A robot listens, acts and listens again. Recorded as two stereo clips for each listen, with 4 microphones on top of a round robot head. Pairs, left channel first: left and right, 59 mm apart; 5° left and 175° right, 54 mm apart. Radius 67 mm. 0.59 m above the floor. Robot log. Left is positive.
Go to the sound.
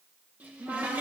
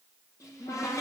note: The cupboard door: 30° right.
cmd yaw -30
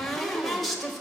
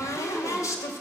cmd fwd 1.0
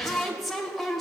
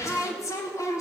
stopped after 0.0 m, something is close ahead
end: Something is in my way. I am facing the cupboard door but have not reached it.